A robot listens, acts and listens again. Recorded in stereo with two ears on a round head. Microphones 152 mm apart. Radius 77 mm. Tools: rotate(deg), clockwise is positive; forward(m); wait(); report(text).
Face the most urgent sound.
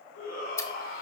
rotate(-60)
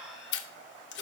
wait()
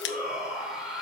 report("Facing the shout.")